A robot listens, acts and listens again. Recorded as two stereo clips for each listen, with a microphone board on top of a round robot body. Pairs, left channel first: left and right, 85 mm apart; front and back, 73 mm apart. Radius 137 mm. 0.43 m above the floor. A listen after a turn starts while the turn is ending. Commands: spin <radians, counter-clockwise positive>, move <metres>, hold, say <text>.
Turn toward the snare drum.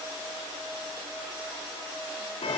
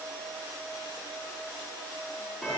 hold
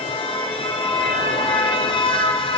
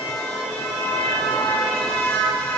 hold
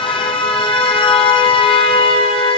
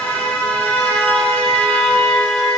say I can't make out a snare drum, only a car horn.